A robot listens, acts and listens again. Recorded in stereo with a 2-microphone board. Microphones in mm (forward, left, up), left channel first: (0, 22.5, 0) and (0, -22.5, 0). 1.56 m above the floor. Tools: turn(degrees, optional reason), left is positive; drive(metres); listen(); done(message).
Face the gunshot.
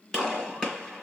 turn(degrees=15, reason="The gunshot: about 15° left or 165° left.")
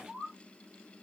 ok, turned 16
listen()
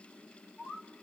done("I heard a gunshot, but can't make it out now. It was about straight ahead or 150° left.")